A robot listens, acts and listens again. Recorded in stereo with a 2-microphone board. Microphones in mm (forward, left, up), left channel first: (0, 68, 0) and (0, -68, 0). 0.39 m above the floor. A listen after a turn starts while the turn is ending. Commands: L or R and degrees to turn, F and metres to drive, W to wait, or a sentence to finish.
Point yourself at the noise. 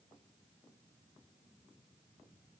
W
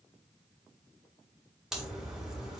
R30
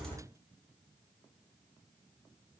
W
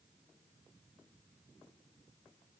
I heard a crack, but can't make it out now. It was about 25° left or 145° right.